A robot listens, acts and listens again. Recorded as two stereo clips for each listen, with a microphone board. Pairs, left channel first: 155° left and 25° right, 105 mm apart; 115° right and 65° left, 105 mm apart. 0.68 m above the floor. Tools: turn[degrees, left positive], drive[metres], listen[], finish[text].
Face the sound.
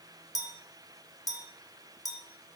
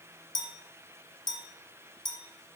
Thought: The clink: 150° right.
Action: turn[-150]
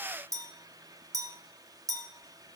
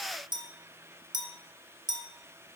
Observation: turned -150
Thought: The clink is now 30° left.
Action: turn[30]
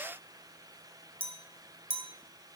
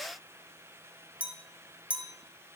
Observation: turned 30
Thought: The clink is now 10° right.
Action: turn[-10]
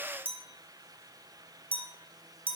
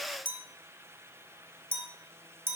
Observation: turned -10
Action: finish[Facing the clink.]